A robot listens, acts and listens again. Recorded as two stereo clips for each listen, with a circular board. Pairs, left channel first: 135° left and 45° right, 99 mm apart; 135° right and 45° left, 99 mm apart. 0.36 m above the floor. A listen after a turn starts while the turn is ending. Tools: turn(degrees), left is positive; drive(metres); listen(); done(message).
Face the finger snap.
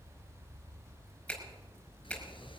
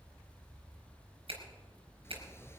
turn(degrees=60)
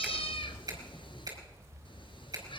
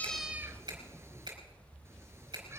done("Facing the finger snap, over 4 m away.")